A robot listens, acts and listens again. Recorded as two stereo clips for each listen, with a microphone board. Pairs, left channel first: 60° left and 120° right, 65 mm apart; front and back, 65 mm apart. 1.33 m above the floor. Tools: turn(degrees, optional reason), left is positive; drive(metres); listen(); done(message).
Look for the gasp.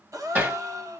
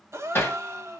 turn(degrees=-140, reason="The gasp: 140° right.")
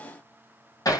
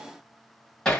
done("I heard a gasp from this way, but can't make it out now.")